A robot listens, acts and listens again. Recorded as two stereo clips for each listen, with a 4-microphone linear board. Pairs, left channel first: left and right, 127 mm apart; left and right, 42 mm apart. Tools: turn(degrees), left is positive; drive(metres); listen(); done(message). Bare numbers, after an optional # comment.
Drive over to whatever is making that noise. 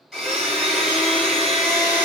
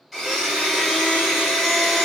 turn(30)
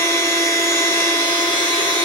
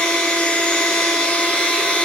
# So it is at 150° left.
turn(150)
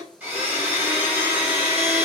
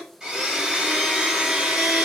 # The blender is now 20° right.
turn(-20)
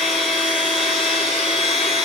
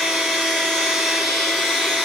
drive(1.0)
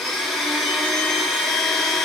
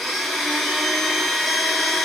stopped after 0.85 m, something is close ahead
done("I am next to the blender.")